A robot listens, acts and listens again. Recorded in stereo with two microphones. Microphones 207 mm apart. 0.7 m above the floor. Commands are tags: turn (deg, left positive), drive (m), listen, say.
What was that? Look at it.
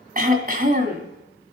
<turn deg="-40"/>
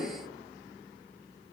<listen/>
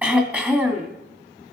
<turn deg="-10"/>
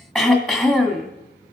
<say>Found it: throat clearing, straight ahead.</say>